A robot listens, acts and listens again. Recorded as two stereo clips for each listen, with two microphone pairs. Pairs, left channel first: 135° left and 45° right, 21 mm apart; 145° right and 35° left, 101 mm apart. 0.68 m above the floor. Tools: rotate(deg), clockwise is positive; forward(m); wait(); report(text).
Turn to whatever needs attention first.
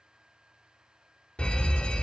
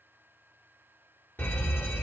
rotate(-145)
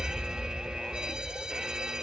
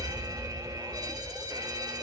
report("Facing the fire alarm, 2 to 4 m away.")